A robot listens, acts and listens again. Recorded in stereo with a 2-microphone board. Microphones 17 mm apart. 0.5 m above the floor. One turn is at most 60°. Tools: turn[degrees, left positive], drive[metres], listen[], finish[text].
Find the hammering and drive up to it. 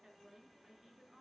Action: listen[]
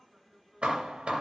Action: turn[-60]
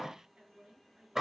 Thought: So it is at 20° right.
Action: turn[-20]
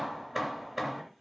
Thought: The hammering is now 10° right.
Action: turn[-10]
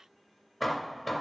Action: drive[1.0]
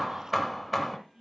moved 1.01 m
Action: drive[1.0]
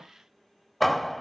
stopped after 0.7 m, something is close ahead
Thought: The hammering is now 10° left.
Action: turn[10]
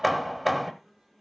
Action: finish[I am next to the hammering.]